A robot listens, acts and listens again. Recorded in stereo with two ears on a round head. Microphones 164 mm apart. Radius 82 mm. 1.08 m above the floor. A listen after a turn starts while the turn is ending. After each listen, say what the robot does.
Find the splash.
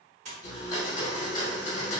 Turn 40° right.
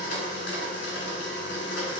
Keep listening.
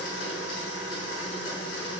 I heard a splash, but can't make it out now. It was about straight ahead or 100° right.